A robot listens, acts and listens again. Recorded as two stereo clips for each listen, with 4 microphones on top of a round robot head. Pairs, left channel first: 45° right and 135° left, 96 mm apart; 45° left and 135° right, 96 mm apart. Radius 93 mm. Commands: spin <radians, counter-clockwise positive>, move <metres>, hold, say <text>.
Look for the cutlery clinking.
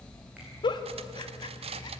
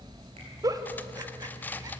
spin 2.09
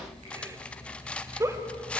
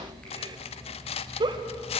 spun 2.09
spin 0.61
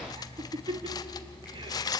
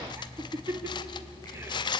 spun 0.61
say Found it: cutlery clinking, straight ahead, under 1 m away.